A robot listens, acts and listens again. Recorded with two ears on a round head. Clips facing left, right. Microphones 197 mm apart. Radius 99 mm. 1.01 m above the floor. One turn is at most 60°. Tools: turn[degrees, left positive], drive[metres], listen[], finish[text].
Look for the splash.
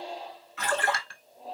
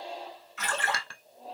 Thought: The splash: about 55° left or 125° left.
Action: turn[55]
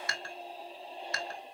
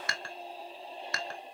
Action: listen[]
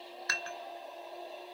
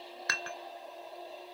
Action: finish[I heard a splash, but can't make it out now. It was about straight ahead or 70° left.]